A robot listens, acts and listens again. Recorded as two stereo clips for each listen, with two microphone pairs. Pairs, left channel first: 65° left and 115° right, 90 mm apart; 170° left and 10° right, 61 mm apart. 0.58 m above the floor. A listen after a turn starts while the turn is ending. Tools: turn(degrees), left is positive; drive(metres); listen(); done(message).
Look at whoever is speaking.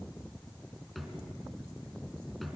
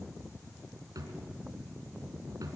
listen()
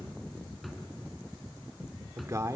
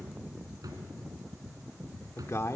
turn(degrees=-165)
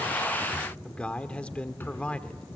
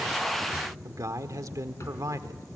turn(degrees=-10)
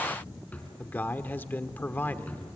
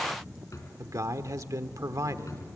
done("Facing the man speaking, 1 to 2 m away.")